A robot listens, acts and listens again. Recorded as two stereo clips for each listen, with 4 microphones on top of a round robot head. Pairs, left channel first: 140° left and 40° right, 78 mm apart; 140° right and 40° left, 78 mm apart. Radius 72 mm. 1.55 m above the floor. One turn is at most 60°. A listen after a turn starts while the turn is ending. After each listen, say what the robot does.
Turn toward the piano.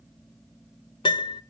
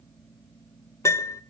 Turn 60° left.
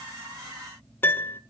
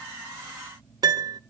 Turn 60° left.
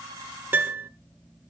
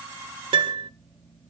Turn 30° left.
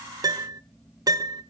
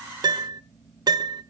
Found it: a piano, straight ahead.